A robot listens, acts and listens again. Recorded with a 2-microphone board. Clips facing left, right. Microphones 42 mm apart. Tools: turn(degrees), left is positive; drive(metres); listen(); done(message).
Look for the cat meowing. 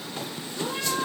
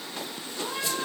turn(degrees=30)
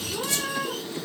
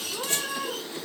done("Found it: a cat meowing, straight ahead.")